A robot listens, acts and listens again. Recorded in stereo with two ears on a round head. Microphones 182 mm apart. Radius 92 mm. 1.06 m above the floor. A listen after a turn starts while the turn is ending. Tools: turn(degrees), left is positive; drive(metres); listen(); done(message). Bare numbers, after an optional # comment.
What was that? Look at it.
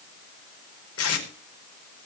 turn(90)
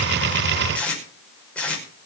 done("Facing the tape being pulled, over 4 m away.")